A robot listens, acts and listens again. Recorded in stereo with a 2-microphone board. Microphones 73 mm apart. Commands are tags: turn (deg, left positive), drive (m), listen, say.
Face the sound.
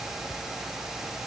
<listen/>
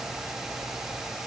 <listen/>
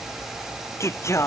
<turn deg="40"/>
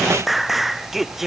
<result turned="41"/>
<say>Found it: singing, straight ahead.</say>